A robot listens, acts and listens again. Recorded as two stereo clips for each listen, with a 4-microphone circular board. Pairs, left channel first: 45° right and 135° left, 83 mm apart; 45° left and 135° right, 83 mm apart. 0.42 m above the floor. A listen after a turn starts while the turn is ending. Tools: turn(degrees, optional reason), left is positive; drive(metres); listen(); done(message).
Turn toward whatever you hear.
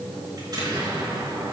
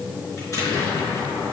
turn(degrees=95, reason="The explosion: 95° left.")
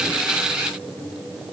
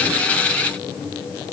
done("Facing where the explosion came from. I can't hear it now.")